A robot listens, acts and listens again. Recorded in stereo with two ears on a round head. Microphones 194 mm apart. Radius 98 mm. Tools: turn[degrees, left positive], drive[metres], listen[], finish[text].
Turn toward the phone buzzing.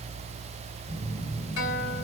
Thought: The phone buzzing: about 20° left or 160° left.
Action: turn[20]
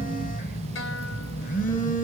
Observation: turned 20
Thought: So it is at 140° left.
Action: turn[140]
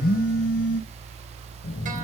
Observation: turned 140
Thought: The phone buzzing is now 40° left.
Action: turn[40]
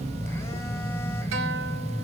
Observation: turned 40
Thought: The phone buzzing is now 10° left.
Action: turn[10]
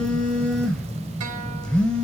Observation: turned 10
Action: finish[Facing the phone buzzing.]